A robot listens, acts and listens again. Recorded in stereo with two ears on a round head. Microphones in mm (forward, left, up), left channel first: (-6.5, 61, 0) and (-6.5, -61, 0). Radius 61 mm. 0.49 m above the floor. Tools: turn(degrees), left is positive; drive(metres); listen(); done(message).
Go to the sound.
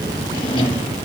turn(degrees=35)
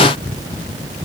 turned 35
listen()
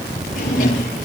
turn(degrees=110)
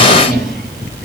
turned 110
drive(metres=1.0)
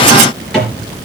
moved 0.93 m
drive(metres=1.0)
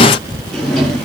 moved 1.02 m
drive(metres=1.0)
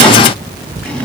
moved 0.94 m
turn(degrees=10)
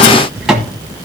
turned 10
drive(metres=1.0)
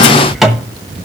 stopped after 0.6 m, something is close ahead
done("Arrived at the drawer, straight ahead.")